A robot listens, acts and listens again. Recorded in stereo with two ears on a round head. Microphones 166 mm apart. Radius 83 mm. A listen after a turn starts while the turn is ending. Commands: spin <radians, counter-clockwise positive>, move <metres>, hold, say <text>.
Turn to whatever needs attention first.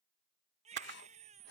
spin -0.70
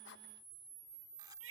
spin -1.75
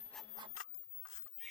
say Found it: a baby crying, straight ahead.